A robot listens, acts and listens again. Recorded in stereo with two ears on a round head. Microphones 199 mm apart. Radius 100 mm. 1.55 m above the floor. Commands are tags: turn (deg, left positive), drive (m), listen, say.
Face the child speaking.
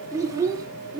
<turn deg="-20"/>
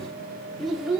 <turn deg="-30"/>
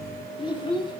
<turn deg="20"/>
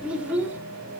<turn deg="-10"/>
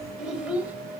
<say>Facing the child speaking.</say>